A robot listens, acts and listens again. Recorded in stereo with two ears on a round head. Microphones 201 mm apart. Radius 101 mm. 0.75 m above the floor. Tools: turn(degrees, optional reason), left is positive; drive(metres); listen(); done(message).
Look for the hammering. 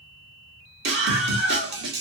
listen()
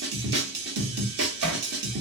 turn(degrees=-70, reason="The hammering: about 70° right or 110° right.")
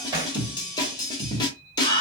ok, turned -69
turn(degrees=-20, reason="So it is at 20° right.")
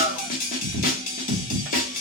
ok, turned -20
listen()
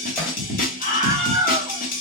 listen()
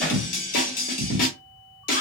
done("Facing where the hammering came from. I can't hear it now.")